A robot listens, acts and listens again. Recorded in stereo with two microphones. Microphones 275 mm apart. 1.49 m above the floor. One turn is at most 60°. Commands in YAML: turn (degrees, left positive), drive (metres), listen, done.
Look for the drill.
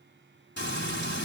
listen: true
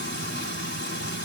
listen: true
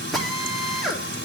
turn: 30
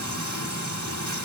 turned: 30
listen: true
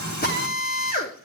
turn: 60
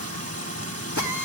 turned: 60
turn: 60
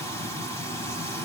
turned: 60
turn: 35
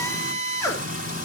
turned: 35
turn: 10
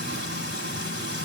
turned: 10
listen: true
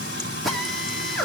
done: "Facing the drill."